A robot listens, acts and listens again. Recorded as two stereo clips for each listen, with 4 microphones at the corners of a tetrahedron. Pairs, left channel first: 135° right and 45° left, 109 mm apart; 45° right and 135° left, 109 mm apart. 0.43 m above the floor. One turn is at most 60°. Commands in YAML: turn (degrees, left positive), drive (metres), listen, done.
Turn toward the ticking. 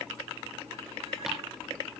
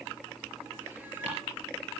listen: true
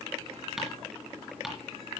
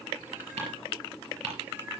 turn: 60
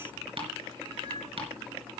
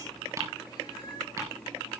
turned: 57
turn: 60
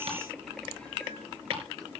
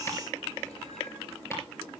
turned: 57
turn: 20
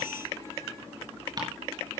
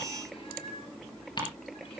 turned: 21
done: "Found it: ticking, straight ahead."